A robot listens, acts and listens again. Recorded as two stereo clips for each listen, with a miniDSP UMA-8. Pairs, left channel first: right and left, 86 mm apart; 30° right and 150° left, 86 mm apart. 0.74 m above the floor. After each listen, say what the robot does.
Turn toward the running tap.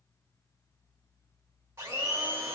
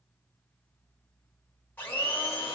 Keep listening.
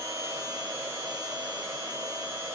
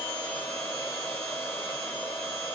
Keep listening.
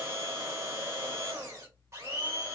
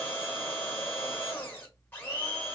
I can't make out a running tap, only a blender.